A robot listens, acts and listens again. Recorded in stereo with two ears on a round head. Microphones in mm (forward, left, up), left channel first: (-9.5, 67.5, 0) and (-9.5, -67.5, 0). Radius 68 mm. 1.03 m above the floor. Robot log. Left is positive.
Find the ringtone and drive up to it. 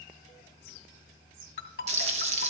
note: The ringtone: about 65° left or 115° left.
cmd yaw +65
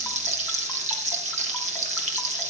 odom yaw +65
cmd idle
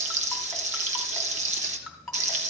cmd fwd 1.0
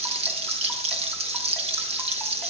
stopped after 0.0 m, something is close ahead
cmd idle
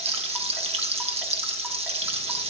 cmd idle
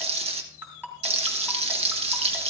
note: The ringtone is now 15° right.
cmd yaw -15
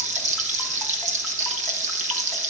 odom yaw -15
cmd idle
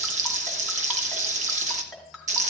end: Blocked. The ringtone is further on, straight ahead.